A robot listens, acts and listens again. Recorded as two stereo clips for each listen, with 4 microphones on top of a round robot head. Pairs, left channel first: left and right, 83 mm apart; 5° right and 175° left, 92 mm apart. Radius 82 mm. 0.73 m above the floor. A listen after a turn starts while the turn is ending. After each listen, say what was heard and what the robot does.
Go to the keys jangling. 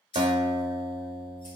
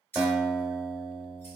The keys jangling: 60° left. Turn 60° left.
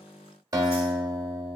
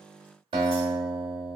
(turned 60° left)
Keep listening.
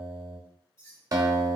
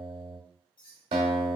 The keys jangling is now 25° left. Turn 25° left.
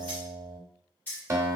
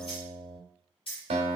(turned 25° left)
The keys jangling is now 15° left. Turn 15° left.
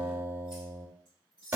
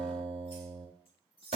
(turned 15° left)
Drive 1.0 m forward.
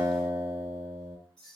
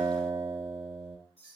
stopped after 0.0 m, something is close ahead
Blocked. The keys jangling is further on, straight ahead.